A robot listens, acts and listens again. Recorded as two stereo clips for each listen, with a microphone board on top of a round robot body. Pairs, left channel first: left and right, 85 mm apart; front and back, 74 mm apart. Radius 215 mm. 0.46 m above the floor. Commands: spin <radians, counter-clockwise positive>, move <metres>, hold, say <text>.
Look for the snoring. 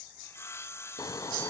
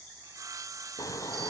spin 0.79
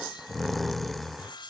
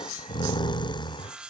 say Found it: snoring, straight ahead.